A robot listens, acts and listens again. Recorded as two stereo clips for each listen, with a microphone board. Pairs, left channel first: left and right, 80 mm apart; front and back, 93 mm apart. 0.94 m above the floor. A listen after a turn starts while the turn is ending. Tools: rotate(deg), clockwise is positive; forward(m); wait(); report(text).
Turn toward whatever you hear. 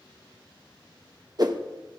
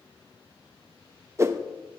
rotate(120)
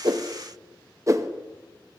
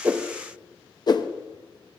rotate(40)
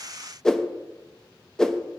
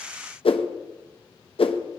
report("Facing the whoosh, under 1 m away.")